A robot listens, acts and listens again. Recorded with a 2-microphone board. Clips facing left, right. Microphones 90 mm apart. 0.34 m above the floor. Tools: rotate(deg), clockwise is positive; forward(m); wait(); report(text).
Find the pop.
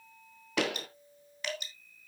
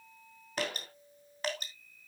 rotate(-90)
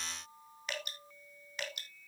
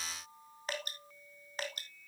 report("I heard a pop from this way, but can't make it out now.")